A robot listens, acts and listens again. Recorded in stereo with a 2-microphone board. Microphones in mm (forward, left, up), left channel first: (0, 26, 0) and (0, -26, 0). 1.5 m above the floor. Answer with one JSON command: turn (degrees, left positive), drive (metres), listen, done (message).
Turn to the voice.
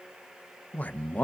{"turn": 30}
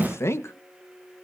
{"turn": 120}
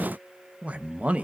{"turn": -30}
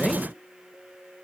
{"listen": true}
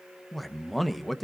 {"done": "Facing the man speaking, 1 to 2 m away."}